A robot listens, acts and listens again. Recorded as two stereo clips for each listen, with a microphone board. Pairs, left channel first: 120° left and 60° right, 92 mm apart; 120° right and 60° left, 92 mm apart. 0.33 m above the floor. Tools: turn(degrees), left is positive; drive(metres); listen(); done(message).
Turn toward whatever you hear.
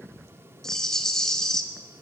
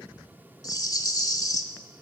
turn(degrees=-155)
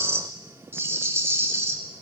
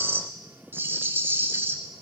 done("Facing the rattle, 1 to 2 m away.")